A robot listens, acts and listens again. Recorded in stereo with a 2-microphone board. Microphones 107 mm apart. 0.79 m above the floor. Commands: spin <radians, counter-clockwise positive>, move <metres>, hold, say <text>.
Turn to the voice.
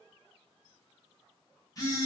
hold
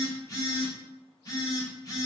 hold
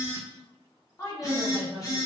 spin 0.52
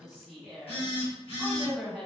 say Facing the woman speaking, 1 to 2 m away.